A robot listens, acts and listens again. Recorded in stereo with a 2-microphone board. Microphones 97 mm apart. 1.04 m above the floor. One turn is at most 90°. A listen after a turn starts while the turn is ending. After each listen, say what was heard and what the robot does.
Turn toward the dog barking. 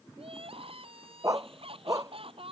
The dog barking: about 35° right or 145° right. Turn 35° right.
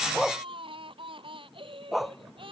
Facing the dog barking.